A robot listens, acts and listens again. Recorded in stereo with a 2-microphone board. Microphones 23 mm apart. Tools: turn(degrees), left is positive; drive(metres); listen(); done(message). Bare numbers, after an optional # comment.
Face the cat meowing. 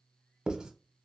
listen()
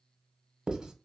listen()
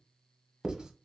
done("I can't make out a cat meowing, only writing.")